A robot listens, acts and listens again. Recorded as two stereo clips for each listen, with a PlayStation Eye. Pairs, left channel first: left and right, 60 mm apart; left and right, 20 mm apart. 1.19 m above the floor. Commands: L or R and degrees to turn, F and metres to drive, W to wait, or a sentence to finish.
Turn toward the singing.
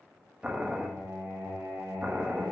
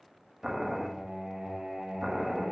R70
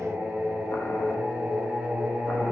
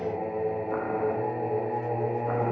R30
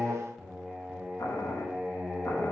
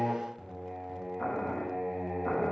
R10
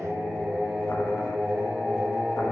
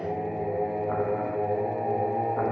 Facing the singing.